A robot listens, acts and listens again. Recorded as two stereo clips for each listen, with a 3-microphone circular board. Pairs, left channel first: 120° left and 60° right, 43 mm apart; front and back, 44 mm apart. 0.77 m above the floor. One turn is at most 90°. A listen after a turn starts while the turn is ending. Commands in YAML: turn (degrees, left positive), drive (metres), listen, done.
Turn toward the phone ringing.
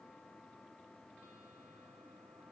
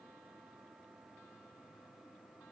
listen: true
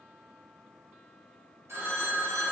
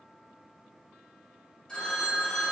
turn: -75
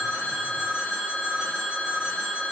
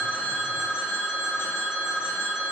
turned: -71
done: "Found it: a phone ringing, straight ahead."